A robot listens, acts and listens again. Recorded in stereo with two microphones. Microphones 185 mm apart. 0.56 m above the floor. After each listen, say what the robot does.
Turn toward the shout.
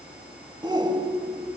Turn 25° right.
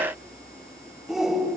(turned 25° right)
Found it: a shout, straight ahead.